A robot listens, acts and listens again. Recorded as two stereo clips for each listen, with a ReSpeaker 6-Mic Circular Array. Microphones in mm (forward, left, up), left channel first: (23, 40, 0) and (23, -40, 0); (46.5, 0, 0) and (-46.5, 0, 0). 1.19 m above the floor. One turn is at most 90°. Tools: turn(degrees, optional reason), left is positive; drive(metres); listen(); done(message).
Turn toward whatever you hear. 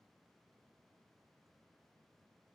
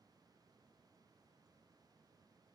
listen()
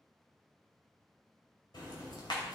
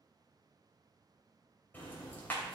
turn(degrees=70, reason="The ticking: 70° left.")
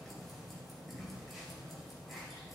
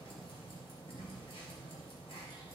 done("Found it: ticking, straight ahead, 2 to 4 m away.")